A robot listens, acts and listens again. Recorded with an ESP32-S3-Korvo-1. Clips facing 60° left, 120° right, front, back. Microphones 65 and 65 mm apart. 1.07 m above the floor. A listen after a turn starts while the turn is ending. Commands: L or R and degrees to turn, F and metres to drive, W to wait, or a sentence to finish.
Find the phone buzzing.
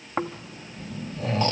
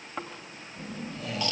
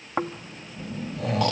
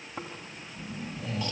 R60
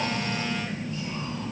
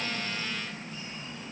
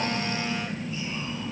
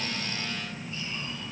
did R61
Facing the phone buzzing, 1 to 2 m away.